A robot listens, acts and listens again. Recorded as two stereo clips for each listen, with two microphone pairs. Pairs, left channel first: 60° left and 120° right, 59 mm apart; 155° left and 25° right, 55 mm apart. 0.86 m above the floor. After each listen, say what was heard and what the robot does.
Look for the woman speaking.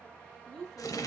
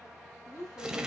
The woman speaking: 155° left. Turn 155° left.
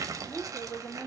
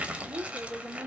The woman speaking is now 30° left. Turn 30° left.
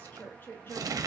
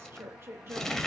The woman speaking is now 15° left. Turn 15° left.
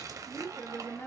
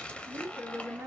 The woman speaking is now 25° left. Turn 25° left.
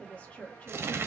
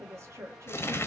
Found it: a woman speaking, straight ahead.